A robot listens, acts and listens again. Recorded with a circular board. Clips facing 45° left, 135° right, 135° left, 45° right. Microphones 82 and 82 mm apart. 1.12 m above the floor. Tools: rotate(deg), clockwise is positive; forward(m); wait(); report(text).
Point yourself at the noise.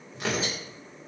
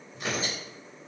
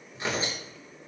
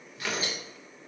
rotate(-70)
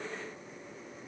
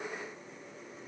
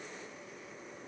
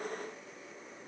wait()
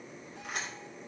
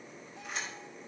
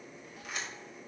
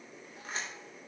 rotate(-10)
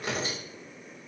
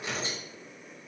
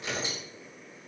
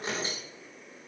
report("Found it: tearing paper, straight ahead.")